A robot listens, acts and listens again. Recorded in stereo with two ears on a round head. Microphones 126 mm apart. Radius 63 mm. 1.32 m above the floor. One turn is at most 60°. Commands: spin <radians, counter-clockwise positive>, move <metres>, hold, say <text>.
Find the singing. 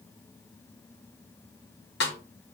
hold
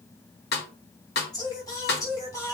spin 0.35
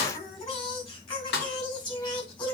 spin 0.52
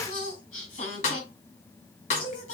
spin 1.05
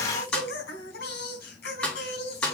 spin 1.05
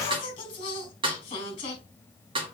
spin 0.61
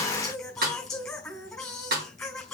say Found it: singing, straight ahead.